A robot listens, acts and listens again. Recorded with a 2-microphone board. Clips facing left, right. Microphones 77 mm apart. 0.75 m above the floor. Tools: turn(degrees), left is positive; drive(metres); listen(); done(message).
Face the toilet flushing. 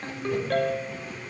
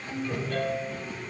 turn(degrees=-50)
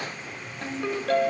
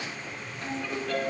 listen()
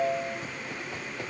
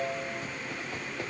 listen()
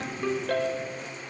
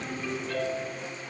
done("I heard a toilet flushing, but can't make it out now. It was about straight ahead or 80° right.")